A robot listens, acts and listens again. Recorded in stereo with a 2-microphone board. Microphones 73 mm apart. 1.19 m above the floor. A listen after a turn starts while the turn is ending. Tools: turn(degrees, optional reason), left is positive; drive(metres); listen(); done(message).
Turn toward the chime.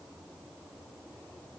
listen()
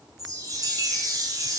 turn(degrees=-50, reason="The chime: about 50° right or 130° right.")
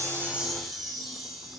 done("Found it: a chime, straight ahead.")